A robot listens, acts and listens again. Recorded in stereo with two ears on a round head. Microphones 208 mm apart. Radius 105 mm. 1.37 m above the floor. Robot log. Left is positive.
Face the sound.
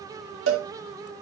note: The cowbell: about 65° right or 115° right.
cmd yaw -65
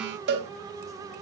note: So it is at 50° right.
cmd yaw -50
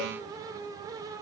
cmd idle
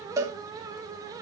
note: The cowbell is now 15° right.
cmd yaw -15
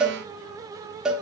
end: Facing the cowbell.